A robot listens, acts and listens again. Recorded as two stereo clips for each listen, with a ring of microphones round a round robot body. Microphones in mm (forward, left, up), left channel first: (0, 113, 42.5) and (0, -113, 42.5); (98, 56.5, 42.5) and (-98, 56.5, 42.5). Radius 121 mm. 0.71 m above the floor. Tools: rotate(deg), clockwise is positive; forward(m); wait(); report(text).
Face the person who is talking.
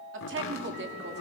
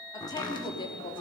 rotate(60)
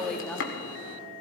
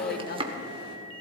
rotate(-10)
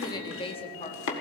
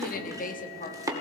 rotate(-35)
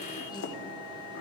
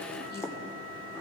wait()
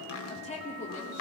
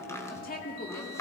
rotate(-35)
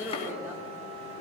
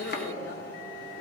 rotate(10)
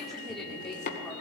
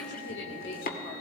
report("Facing the woman speaking, 2 to 4 m away.")